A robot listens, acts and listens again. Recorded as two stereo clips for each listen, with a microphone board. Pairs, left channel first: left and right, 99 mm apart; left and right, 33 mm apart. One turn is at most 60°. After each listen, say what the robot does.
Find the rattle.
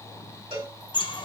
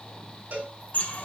Keep listening.
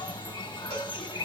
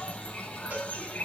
Keep listening.
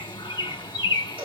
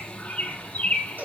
I can't make out a rattle, only a bird and a cowbell.